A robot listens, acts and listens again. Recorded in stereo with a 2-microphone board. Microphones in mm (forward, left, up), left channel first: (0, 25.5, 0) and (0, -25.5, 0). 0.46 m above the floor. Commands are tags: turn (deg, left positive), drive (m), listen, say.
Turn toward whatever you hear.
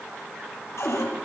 <turn deg="90"/>
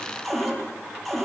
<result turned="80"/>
<say>Facing the cupboard door, over 4 m away.</say>